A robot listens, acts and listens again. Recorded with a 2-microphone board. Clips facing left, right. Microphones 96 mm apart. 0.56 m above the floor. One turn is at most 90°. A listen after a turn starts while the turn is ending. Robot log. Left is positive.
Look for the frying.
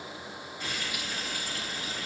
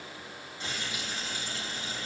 note: The frying: about 25° right or 155° right.
cmd yaw -25
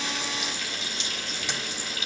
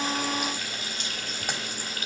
note: So it is at 125° right.
cmd yaw -90
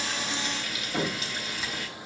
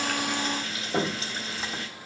note: The frying is now 40° right.
cmd yaw -40
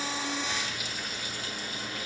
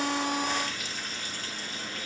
end: Facing the frying, 2 to 4 m away.